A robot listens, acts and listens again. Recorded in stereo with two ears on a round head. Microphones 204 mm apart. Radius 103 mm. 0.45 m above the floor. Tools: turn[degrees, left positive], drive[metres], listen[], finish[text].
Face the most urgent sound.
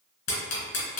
Action: listen[]
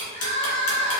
Thought: The crying: about 25° left or 155° left.
Action: turn[25]
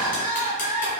Thought: So it is at 125° left.
Action: turn[125]
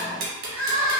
Thought: The crying is now 45° left.
Action: turn[45]
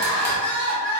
Thought: The crying is now 10° left.
Action: turn[10]
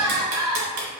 Action: finish[Found it: crying, straight ahead, 1 to 2 m away.]